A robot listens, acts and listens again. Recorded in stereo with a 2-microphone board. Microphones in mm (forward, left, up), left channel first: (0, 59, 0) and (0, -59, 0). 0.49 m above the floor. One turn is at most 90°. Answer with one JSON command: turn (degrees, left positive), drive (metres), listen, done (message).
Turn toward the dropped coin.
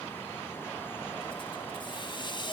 {"listen": true}
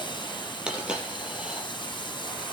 {"turn": -30}
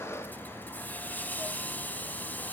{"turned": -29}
{"listen": true}
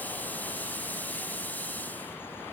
{"done": "I heard a dropped coin, but can't make it out now. It was about 20° left or 145° right."}